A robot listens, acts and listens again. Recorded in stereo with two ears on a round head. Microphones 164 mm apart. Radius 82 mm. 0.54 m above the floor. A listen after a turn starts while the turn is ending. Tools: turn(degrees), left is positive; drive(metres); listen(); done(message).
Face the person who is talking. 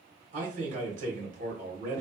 turn(degrees=-45)
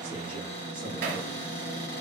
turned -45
listen()
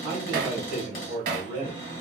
turn(degrees=-10)
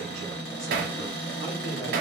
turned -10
listen()
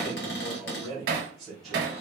done("Facing the man speaking, 1 to 2 m away.")